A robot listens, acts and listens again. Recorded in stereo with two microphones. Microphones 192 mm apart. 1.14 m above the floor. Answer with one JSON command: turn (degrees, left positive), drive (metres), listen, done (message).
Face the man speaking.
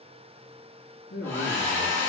{"turn": 60}
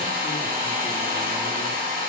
{"listen": true}
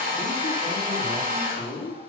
{"turn": 65}
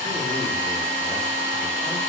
{"listen": true}
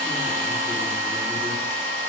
{"listen": true}
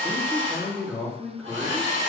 {"done": "Found it: a man speaking, straight ahead, 1 to 2 m away."}